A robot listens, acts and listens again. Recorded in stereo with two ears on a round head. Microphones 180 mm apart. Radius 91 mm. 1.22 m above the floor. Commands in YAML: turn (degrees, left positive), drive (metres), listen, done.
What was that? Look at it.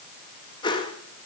turn: 25
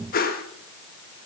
turn: 130
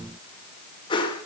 turn: 25
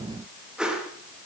done: "Facing the whoosh, 1 to 2 m away."